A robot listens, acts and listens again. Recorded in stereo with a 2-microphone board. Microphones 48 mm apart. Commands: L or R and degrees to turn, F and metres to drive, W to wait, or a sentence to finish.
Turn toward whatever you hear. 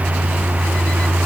W
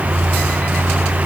W
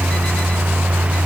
I can't make out anything.